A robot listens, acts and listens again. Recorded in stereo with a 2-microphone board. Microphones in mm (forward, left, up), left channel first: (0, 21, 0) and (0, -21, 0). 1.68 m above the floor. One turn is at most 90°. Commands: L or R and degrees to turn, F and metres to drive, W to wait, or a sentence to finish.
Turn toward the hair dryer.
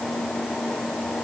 W
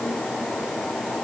W
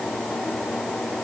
I can't make out a hair dryer.